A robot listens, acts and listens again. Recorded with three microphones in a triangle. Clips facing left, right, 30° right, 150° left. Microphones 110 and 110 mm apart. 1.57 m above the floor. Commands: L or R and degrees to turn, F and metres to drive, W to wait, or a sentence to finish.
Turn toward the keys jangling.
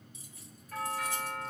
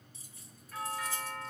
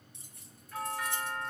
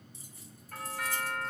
R35
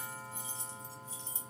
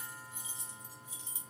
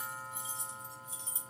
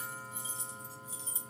R15
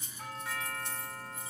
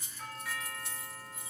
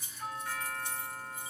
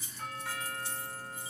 Facing the keys jangling.